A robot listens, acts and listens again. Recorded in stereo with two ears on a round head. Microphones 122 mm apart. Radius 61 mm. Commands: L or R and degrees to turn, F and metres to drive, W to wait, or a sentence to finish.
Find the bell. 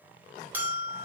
R30
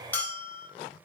L15
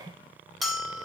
Facing the bell, 1 to 2 m away.